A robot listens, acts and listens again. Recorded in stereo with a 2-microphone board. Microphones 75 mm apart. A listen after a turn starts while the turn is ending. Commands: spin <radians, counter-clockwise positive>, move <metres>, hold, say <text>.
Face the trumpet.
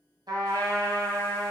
spin -1.22
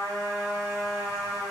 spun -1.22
spin -0.70
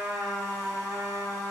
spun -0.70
spin -0.26
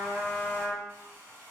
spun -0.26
say Found it: a trumpet, straight ahead.